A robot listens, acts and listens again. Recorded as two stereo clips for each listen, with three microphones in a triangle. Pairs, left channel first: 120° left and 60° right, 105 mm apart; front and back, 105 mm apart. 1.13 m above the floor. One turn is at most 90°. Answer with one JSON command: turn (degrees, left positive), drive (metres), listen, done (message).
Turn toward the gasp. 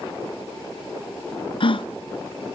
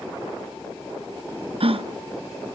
{"turn": 90}
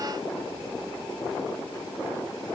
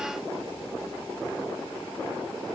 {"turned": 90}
{"turn": 65}
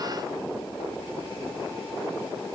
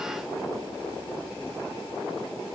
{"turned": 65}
{"done": "Facing where the gasp came from. I can't hear it now."}